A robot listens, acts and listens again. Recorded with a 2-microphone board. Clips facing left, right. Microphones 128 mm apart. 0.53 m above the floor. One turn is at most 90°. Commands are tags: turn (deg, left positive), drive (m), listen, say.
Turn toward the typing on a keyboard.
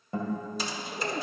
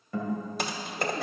<turn deg="-60"/>
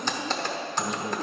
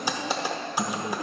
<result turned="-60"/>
<turn deg="-10"/>
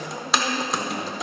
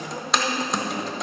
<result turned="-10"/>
<say>Found it: typing on a keyboard, straight ahead, under 1 m away.</say>